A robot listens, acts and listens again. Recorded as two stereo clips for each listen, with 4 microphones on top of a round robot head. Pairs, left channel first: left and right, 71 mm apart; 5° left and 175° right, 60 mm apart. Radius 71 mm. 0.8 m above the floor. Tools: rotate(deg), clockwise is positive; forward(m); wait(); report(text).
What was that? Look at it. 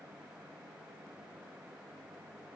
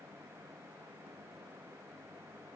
wait()
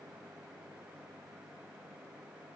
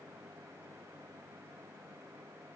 wait()
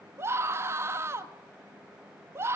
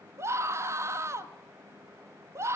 rotate(140)
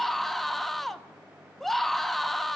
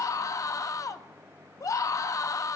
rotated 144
report("Facing the scream.")